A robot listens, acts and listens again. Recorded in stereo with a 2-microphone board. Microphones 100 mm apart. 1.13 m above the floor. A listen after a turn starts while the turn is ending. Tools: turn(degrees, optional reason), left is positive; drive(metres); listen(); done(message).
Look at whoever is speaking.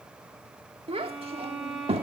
turn(degrees=-75, reason="The child speaking: about 75° right or 105° right.")
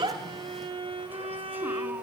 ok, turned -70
listen()
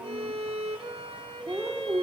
turn(degrees=-20, reason="So it is at 20° right.")
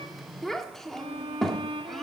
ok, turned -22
done("Found it: a child speaking, straight ahead, 1 to 2 m away.")